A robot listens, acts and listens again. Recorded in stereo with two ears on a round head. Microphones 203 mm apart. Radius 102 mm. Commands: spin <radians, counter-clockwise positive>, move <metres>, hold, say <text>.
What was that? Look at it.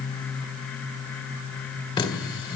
spin 0.35
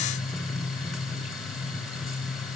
say Facing the running tap, 2 to 4 m away.